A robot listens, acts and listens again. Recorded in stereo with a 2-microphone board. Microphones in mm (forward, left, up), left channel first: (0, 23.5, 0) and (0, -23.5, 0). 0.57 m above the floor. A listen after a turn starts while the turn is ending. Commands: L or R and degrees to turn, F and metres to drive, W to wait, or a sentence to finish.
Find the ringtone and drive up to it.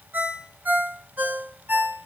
R35
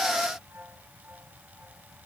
W
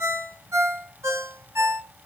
R110
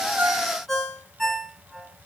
F1.0
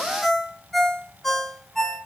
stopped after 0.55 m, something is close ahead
Blocked. The ringtone is further on, straight ahead.